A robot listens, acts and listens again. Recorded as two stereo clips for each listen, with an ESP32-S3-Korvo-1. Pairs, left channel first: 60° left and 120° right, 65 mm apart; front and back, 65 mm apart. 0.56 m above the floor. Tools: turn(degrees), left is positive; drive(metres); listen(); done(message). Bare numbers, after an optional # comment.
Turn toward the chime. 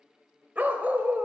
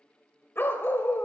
listen()
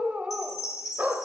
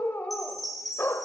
# The chime: 90° left.
turn(90)
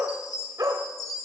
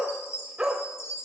# The chime is now 40° left.
turn(40)
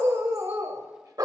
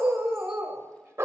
listen()
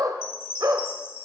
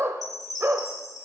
# The chime is now 10° left.
turn(10)
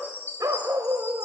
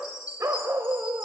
done("Found it: a chime, straight ahead.")